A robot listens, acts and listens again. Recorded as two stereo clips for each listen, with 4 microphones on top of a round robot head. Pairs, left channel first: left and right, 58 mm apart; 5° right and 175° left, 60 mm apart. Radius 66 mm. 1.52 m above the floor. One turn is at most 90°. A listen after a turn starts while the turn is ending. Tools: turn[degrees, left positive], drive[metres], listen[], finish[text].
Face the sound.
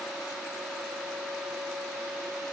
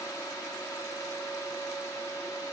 Action: listen[]
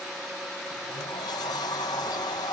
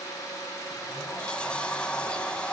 Thought: The sliding door: 65° left.
Action: turn[65]
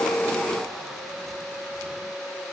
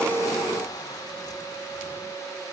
Action: listen[]
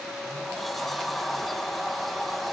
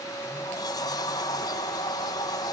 Action: finish[Found it: a sliding door, straight ahead.]